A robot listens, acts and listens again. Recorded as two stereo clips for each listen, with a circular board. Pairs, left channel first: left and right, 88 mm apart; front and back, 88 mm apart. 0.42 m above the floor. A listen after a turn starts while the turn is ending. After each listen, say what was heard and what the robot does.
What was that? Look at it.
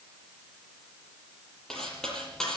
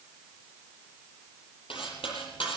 Facing the cutlery clinking, over 4 m away.